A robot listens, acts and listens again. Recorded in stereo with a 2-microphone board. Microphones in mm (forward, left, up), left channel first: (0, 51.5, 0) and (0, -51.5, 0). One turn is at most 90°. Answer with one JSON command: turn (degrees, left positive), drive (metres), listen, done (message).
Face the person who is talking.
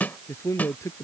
{"turn": 30}
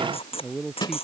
{"done": "Facing the man speaking."}